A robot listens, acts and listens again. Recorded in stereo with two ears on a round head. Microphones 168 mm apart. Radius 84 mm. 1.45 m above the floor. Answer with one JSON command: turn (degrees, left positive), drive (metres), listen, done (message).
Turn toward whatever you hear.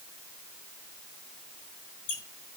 {"turn": 55}
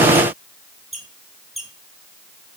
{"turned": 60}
{"done": "Facing the squeak, 2 to 4 m away."}